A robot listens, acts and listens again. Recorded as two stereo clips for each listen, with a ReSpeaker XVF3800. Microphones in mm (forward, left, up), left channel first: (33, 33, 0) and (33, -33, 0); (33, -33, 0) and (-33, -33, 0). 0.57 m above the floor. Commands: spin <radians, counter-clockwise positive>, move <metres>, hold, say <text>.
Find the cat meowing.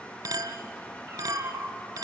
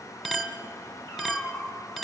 spin -0.79
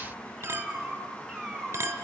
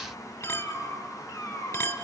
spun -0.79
say Facing the cat meowing, over 4 m away.